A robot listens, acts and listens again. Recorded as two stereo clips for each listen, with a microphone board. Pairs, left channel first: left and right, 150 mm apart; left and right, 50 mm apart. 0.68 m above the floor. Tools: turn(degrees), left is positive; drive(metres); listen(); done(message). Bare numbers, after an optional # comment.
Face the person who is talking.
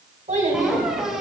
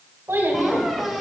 # The child speaking: about 55° right or 125° right.
turn(-55)
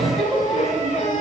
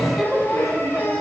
done("Found it: a child speaking, straight ahead, 2 to 4 m away.")